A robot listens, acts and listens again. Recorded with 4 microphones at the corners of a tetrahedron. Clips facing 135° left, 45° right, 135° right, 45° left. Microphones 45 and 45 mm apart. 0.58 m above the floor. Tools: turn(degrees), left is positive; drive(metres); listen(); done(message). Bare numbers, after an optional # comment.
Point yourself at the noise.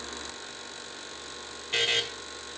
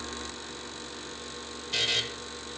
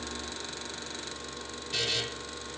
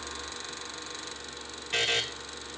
# The buzzer: 85° left.
turn(85)
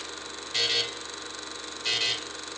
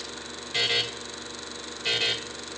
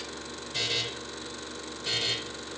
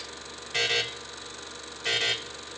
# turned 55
# The buzzer is now 30° left.
turn(30)
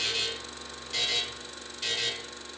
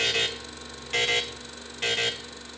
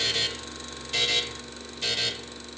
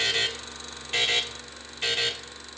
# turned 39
# The buzzer is now 10° right.
turn(-10)
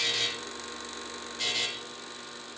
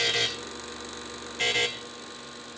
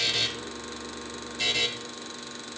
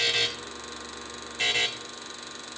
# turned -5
done("Found it: a buzzer, straight ahead, 1 to 2 m away.")